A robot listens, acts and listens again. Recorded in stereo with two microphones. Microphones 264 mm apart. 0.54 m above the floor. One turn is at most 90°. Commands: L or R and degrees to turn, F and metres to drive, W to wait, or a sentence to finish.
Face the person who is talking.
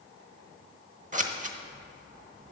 W
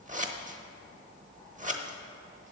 W
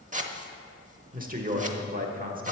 R30
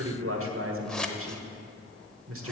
R90
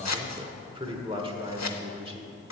R25
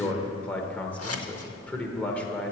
Found it: a man speaking, straight ahead, 1 to 2 m away.